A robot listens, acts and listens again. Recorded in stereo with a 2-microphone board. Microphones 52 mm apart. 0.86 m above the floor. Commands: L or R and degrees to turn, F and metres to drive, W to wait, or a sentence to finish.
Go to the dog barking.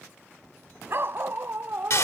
R50
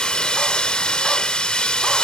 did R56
W
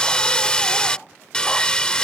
W
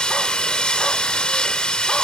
I heard a dog barking, but can't make it out now. It was about 10° left or 75° right. I did not reach it.